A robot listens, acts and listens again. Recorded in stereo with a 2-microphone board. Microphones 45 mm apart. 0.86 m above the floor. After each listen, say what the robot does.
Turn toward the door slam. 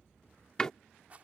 Turn 15° left.
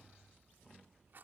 Keep listening.
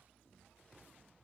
I heard a door slam, but can't make it out now. It was about straight ahead or 150° left.